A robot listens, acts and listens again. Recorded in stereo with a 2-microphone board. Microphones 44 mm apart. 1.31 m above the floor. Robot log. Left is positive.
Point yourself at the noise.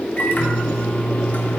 note: The microwave: about 45° left or 135° left.
cmd yaw +45
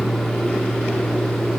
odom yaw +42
end: Found it: a microwave, straight ahead.